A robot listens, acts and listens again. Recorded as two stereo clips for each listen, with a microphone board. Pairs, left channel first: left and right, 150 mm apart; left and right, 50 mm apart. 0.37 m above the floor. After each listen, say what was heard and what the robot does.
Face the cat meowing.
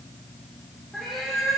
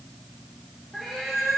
Turn 30° left.
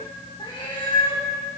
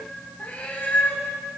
So it is at 145° left. Turn 145° left.
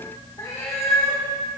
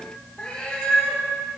The cat meowing is now 20° left. Turn 20° left.
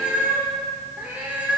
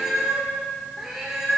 The cat meowing is now 10° right. Turn 10° right.
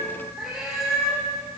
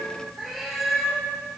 Facing the cat meowing.